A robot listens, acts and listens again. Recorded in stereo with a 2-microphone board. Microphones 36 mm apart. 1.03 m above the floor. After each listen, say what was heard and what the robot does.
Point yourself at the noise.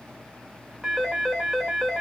Turn 30° left.
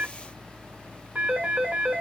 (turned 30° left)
So it is at 30° right. Turn 30° right.
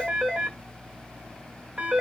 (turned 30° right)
The phone ringing is now 15° right. Turn 15° right.
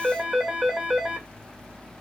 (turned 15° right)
Found it: a phone ringing, straight ahead.